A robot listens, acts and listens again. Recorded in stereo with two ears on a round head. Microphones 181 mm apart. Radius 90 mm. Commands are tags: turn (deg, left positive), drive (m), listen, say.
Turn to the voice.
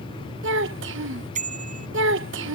<turn deg="-65"/>
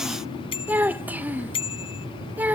<turn deg="-10"/>
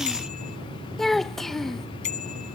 <say>Facing the child speaking.</say>